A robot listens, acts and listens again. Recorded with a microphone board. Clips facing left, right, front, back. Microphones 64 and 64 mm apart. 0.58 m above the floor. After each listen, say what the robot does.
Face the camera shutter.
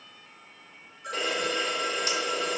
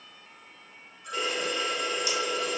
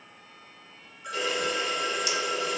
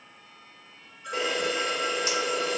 Turn 130° left.
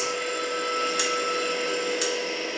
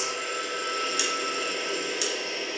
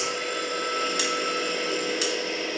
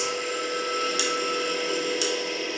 Turn 50° left.
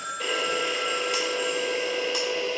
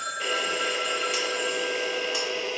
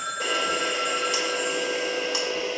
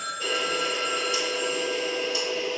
Found it: a camera shutter, straight ahead, under 1 m away.